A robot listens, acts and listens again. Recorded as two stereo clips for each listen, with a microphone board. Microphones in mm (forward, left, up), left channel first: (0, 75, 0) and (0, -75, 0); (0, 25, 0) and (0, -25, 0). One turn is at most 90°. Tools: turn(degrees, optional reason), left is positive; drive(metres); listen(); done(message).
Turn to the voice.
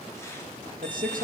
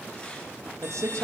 turn(degrees=-70, reason="The man speaking: about 70° right or 110° right.")
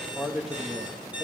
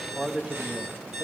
done("Found it: a man speaking, straight ahead, 2 to 4 m away.")